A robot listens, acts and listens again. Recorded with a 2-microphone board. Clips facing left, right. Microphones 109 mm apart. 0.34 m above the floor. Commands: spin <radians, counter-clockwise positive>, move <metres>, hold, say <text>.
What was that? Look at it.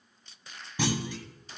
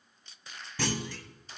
spin 0.26
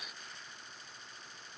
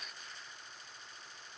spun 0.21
hold
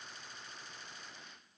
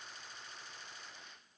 say I heard a clunk, but can't make it out now. It was about 5° left or 155° left.